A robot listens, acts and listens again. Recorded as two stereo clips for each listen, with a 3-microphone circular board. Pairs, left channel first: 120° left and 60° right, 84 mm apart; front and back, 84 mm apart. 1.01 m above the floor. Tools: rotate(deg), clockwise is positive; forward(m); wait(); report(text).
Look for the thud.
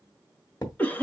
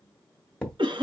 rotate(-75)
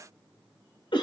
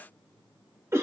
report("Facing where the thud came from. I can't hear it now.")